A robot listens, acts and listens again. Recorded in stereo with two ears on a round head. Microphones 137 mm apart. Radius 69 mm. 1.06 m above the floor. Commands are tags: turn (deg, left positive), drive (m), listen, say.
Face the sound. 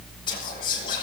<turn deg="30"/>
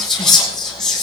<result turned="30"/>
<say>Found it: whispering, straight ahead.</say>